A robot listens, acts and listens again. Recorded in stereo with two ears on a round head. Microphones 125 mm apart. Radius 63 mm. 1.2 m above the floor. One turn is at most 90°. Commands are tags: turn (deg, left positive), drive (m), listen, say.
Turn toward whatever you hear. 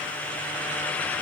<listen/>
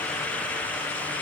<listen/>
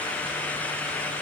<say>I can't make out anything.</say>